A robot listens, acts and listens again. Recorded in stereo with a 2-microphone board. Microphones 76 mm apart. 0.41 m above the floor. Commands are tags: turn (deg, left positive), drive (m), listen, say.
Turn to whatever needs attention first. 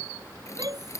<turn deg="-60"/>
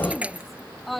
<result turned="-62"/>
<say>Facing the shout.</say>